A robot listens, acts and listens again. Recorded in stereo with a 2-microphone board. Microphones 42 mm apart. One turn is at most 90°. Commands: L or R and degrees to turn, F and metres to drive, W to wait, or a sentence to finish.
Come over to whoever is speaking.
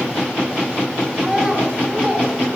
R30
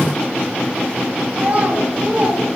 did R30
R90
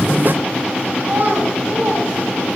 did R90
R55
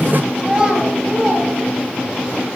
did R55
R20
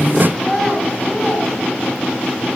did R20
F1.0
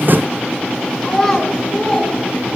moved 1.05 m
L10
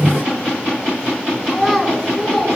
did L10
F1.0
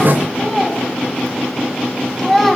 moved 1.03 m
F1.0
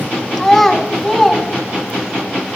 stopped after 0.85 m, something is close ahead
Arrived at the child speaking, straight ahead.